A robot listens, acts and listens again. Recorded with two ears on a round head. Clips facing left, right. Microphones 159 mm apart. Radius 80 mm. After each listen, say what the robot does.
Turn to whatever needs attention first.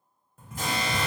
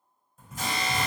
Turn 45° left.
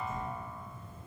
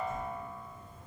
Keep listening.
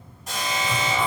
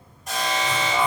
Found it: an alarm, straight ahead, 1 to 2 m away.